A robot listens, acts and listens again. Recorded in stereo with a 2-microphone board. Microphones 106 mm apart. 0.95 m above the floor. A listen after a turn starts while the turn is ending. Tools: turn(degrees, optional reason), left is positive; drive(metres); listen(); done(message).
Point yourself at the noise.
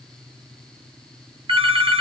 turn(degrees=-55, reason="The phone ringing: about 55° right or 125° right.")
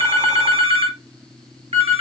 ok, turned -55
turn(degrees=-65, reason="So it is at 65° right.")
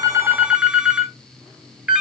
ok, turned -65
turn(degrees=-10, reason="The phone ringing is now 10° right.")
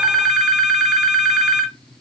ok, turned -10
done("Found it: a phone ringing, straight ahead, under 1 m away.")